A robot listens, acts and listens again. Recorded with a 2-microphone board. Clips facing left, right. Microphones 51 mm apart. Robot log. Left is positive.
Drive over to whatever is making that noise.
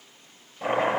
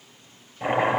note: The chopping: about 20° right or 160° right.
cmd yaw -20
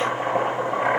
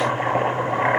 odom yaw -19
note: So it is at 145° right.
cmd yaw -145
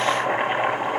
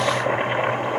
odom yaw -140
cmd fwd 1.0
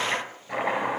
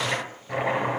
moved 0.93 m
cmd fwd 1.0
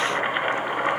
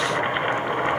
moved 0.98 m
cmd fwd 1.0
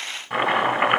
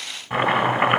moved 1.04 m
cmd fwd 1.0
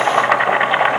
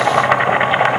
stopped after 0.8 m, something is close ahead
end: Arrived at the chopping, straight ahead.